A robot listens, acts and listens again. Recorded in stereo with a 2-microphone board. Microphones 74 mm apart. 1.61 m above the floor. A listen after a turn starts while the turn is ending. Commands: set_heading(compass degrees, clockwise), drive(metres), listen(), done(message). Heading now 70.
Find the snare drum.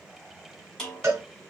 set_heading(40)
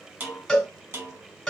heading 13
set_heading(63)
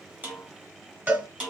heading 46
set_heading(61)
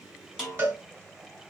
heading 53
set_heading(63)
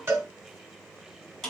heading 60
done("Found it: a snare drum, straight ahead, 2 to 4 m away.")